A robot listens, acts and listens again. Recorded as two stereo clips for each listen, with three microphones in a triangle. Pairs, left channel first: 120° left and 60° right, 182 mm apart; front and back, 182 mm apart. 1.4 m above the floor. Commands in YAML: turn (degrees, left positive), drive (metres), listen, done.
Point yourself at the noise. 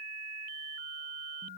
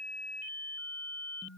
listen: true
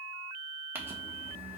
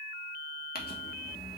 turn: 20
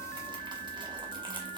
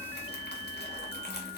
done: "Facing the crumpling."